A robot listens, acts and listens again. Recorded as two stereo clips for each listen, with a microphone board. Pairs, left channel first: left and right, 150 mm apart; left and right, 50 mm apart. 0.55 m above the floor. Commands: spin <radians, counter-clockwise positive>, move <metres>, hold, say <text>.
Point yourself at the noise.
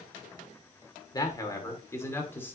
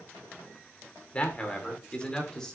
spin 0.52
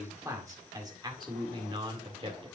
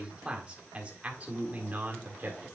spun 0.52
spin -0.70
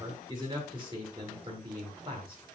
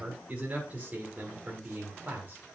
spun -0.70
spin -0.61
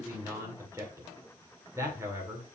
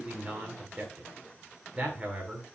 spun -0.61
spin -0.35
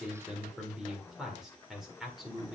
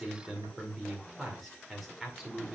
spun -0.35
say Found it: a man speaking, straight ahead, 2 to 4 m away.